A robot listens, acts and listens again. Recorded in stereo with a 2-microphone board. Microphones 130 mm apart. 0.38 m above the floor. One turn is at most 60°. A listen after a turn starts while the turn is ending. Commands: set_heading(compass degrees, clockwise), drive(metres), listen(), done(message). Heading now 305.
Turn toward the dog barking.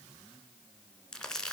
listen()
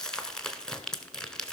listen()
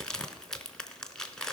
done("I can't make out a dog barking to turn to.")